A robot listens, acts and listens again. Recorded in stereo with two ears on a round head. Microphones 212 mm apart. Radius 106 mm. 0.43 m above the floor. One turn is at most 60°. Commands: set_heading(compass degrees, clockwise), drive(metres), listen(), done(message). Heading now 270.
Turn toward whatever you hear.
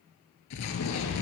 set_heading(210)
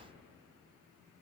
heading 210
set_heading(180)
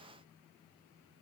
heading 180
done("I heard an explosion from this way, but can't make it out now.")